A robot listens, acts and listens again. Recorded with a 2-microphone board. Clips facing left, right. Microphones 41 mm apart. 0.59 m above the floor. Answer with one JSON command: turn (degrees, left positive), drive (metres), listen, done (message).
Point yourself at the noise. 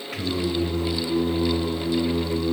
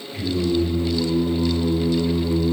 {"turn": 50}
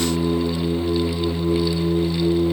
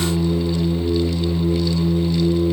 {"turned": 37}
{"turn": 110}
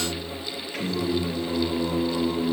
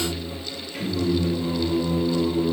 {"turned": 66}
{"turn": 60}
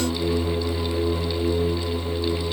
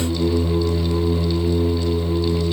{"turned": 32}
{"turn": 30}
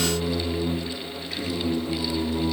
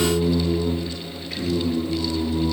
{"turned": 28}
{"done": "Facing the singing, 2 to 4 m away."}